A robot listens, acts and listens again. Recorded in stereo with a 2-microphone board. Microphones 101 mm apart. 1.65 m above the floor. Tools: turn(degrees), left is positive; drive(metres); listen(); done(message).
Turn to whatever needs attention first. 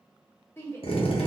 turn(degrees=25)
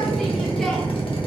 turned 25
listen()
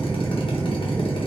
listen()
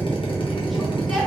done("I heard a shout, but can't make it out now. It was about straight ahead or 130° left.")